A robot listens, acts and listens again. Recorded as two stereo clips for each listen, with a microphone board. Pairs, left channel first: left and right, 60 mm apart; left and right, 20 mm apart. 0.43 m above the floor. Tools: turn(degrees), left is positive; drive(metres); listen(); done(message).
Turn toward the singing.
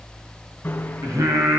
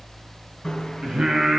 turn(degrees=-60)
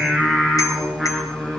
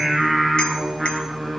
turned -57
done("Facing the singing, over 4 m away.")